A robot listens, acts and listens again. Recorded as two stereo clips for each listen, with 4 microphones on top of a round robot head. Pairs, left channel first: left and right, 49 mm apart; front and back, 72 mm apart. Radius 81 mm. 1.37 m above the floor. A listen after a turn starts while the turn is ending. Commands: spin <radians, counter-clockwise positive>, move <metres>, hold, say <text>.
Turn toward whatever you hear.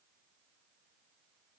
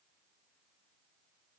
hold
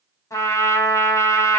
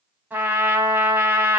spin 1.92
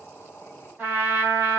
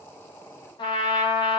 spin -0.44
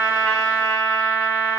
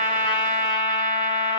say Found it: a trumpet, straight ahead, 2 to 4 m away.